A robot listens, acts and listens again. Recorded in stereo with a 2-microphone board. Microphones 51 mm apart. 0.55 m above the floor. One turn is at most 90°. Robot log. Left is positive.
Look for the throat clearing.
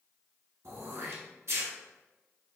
note: The throat clearing: about 65° right or 115° right.
cmd yaw -65
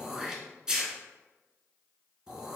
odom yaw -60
note: So it is at 15° right.
cmd yaw -15
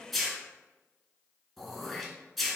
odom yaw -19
end: Facing the throat clearing.